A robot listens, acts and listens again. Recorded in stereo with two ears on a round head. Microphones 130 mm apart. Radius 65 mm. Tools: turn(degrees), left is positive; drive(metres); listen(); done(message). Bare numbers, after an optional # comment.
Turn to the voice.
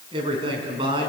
# The man speaking: about 35° right or 145° right.
turn(-35)
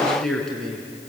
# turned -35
done("Found it: a man speaking, straight ahead, over 4 m away.")